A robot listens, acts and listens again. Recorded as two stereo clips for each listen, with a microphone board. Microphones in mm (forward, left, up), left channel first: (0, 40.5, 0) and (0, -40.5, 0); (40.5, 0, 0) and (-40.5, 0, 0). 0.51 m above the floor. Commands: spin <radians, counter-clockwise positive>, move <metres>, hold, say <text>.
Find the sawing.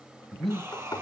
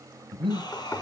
spin -0.61
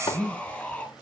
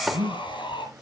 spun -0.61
spin 0.17
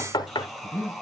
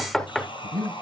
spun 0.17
say Found it: sawing, straight ahead.